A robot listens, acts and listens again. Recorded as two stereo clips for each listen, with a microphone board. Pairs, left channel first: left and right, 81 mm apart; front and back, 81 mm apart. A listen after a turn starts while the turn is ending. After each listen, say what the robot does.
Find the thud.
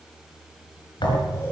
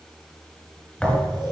Turn 80° left.
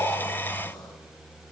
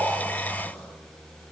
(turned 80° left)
Facing where the thud came from. I can't hear it now.